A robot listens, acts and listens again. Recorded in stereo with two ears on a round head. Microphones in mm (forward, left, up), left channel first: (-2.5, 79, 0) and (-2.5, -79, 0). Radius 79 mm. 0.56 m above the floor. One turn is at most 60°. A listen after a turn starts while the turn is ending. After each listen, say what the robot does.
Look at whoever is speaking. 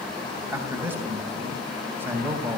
Turn 30° right.
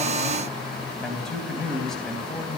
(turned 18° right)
Facing the man speaking.